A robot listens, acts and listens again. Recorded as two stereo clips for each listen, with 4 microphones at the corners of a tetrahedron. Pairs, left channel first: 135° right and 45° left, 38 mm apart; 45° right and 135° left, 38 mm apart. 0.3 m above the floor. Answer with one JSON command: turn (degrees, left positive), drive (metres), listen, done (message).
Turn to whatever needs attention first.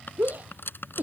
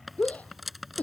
{"done": "Facing the shout."}